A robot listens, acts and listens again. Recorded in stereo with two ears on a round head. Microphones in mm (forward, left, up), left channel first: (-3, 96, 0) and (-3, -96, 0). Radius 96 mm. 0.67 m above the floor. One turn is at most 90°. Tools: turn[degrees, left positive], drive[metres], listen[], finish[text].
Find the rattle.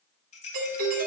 Thought: The rattle: about 35° left or 145° left.
Action: turn[35]
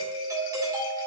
Action: listen[]
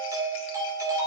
Action: listen[]
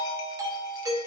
Action: finish[I heard a rattle, but can't make it out now. It was about straight ahead or 110° left.]